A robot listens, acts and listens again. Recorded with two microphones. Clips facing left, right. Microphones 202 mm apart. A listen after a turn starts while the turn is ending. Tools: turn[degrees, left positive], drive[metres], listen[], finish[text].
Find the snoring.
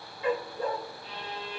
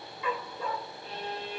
Action: listen[]
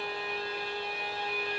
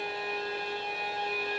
Action: listen[]
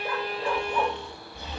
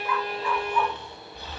Thought: The snoring: about 20° left or 160° left.
Action: turn[20]
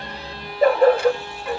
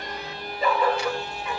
Action: listen[]
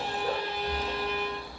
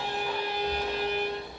Action: finish[Found it: snoring, straight ahead, over 4 m away.]